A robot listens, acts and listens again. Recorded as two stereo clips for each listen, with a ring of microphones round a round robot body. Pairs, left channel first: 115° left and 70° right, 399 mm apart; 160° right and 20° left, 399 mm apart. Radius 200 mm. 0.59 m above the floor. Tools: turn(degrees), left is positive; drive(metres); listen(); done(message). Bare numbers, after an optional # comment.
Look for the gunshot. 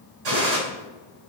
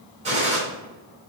# The gunshot: 50° right.
turn(-50)
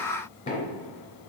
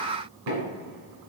done("Facing where the gunshot came from. I can't hear it now.")